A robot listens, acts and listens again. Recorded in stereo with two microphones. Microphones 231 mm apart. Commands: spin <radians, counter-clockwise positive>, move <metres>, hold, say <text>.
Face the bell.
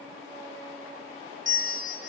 spin -0.96
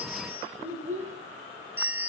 spin -0.17
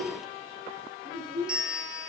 say Facing the bell, 1 to 2 m away.